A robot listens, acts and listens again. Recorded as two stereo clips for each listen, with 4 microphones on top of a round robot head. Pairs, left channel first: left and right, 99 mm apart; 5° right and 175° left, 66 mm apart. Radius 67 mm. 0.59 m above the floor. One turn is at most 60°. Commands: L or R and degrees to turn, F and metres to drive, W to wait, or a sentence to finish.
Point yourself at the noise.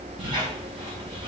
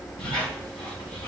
R35
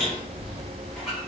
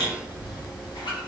Found it: a squeak, straight ahead.